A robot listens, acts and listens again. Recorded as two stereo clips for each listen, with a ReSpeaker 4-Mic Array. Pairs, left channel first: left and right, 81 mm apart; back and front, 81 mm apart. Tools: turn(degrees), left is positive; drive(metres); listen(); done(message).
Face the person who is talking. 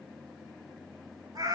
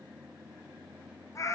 listen()
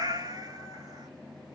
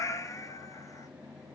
listen()
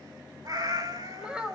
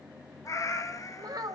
turn(degrees=-15)
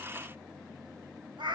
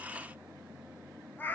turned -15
listen()
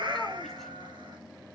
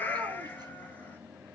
listen()
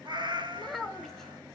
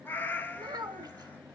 done("Facing the child speaking.")